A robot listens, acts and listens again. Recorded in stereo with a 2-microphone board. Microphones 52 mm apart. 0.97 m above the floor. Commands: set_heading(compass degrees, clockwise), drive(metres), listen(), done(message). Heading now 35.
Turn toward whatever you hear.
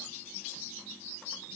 listen()
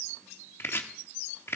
set_heading(345)
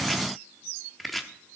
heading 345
done("Found it: chopping, straight ahead, under 1 m away.")